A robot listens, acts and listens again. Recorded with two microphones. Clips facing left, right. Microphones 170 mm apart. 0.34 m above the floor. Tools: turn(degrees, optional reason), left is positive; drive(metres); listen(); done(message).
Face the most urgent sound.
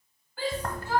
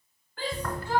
turn(degrees=30)
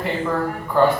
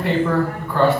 listen()
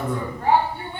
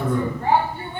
turn(degrees=140, reason="So it is at 140° left.")
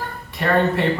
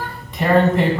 turn(degrees=-35, reason="The shout is now 35° right.")
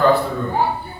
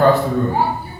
turn(degrees=-10, reason="The shout is now 10° right.")
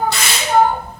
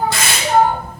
done("Found it: a shout, straight ahead.")